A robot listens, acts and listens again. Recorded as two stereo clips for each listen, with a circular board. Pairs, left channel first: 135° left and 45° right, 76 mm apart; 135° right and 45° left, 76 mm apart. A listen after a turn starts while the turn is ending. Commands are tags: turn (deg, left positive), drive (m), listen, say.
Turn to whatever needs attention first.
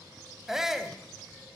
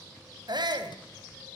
<turn deg="35"/>
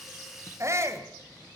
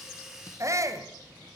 <say>Found it: a shout, straight ahead, 2 to 4 m away.</say>